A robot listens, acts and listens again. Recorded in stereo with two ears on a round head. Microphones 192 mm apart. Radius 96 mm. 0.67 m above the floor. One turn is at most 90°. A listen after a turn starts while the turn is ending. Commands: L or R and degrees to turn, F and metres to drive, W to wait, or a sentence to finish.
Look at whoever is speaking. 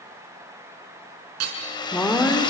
L30
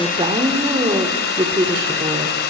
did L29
R25
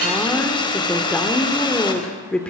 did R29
Found it: a woman speaking, straight ahead.